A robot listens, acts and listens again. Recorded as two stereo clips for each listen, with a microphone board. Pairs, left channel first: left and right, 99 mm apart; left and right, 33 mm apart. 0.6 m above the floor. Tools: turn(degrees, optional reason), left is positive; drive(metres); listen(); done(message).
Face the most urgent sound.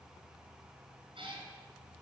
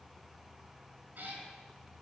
listen()
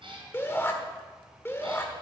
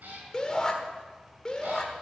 turn(degrees=25, reason="The shout: about 25° left or 155° left.")
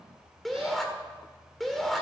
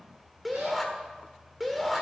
done("Facing the shout, 1 to 2 m away.")